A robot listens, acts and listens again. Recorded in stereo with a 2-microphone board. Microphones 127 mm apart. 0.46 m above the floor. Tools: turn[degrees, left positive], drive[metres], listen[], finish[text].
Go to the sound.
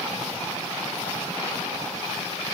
Action: listen[]
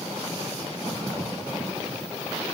Action: listen[]
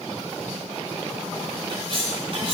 Thought: The cutlery clinking: about 45° right or 135° right.
Action: turn[-45]
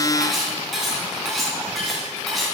Action: drive[1.0]
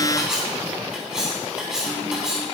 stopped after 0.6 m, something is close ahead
Action: finish[Blocked. The cutlery clinking is further on, straight ahead.]